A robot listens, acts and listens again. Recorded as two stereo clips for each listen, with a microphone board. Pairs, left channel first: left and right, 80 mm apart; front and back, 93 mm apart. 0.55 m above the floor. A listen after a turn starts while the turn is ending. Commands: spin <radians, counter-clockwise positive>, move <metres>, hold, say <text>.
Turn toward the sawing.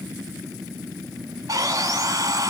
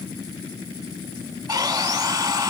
spin -2.36
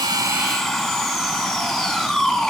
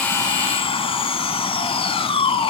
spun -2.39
say Found it: sawing, straight ahead.